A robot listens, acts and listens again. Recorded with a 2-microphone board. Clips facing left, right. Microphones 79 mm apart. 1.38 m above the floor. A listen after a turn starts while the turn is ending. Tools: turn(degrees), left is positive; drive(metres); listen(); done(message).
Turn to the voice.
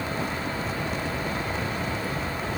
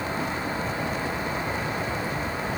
listen()
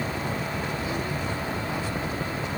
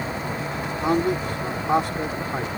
turn(degrees=-70)
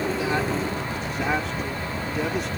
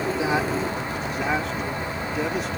listen()
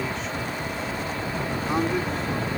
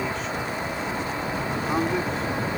done("Facing the man speaking.")